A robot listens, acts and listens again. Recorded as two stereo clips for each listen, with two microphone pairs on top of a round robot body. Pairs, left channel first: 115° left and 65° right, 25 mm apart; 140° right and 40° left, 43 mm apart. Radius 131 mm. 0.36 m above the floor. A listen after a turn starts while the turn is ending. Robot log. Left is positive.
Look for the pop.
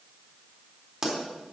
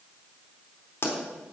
note: The pop: 135° right.
cmd yaw -135
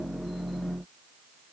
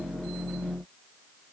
end: I heard a pop from this way, but can't make it out now.